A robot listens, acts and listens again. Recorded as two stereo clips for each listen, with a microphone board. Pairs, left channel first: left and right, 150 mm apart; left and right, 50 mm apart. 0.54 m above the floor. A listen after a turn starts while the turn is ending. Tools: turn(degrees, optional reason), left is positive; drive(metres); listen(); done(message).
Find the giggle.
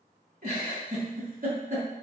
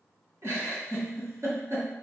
turn(degrees=-60, reason="The giggle: about 60° right or 120° right.")
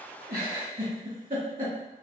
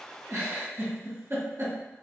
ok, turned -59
turn(degrees=-55, reason="So it is at 55° right.")
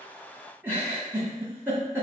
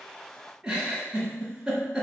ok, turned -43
turn(degrees=-15, reason="The giggle is now 15° right.")
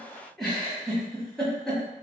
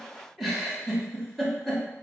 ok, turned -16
done("Facing the giggle.")